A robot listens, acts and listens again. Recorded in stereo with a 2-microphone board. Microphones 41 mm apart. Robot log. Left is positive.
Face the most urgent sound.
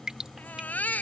note: The baby crying: about 45° left or 135° left.
cmd yaw +45
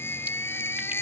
note: So it is at 95° left.
cmd yaw +95
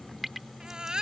note: The baby crying is now 20° right.
cmd yaw -20
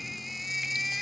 end: Found it: a baby crying, straight ahead.